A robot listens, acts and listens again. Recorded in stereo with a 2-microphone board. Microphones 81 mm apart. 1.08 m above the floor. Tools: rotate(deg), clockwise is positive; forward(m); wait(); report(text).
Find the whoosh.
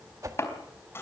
rotate(40)
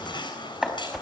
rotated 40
report("Facing the whoosh.")